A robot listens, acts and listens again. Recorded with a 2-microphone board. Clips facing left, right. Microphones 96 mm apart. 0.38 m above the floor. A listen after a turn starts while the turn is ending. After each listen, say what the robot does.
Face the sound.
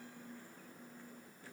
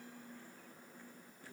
Keep listening.
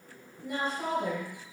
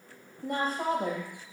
Turn 40° right.
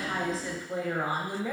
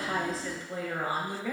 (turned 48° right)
Turn 25° left.
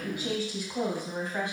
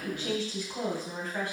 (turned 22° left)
Turn 20° left.
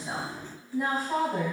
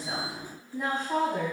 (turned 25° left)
Facing the woman speaking, 2 to 4 m away.